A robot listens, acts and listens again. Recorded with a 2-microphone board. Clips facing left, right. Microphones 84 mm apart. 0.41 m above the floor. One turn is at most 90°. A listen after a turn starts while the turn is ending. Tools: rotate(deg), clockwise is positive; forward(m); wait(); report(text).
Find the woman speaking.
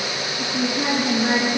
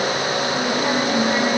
rotate(-90)
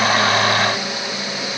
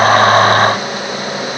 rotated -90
wait()
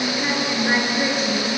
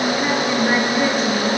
report("Facing the woman speaking.")